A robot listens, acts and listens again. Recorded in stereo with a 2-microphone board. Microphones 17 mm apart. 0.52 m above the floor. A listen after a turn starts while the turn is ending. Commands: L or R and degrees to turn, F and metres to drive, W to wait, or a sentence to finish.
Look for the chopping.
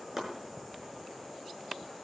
R20
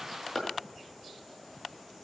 Found it: chopping, straight ahead, over 4 m away.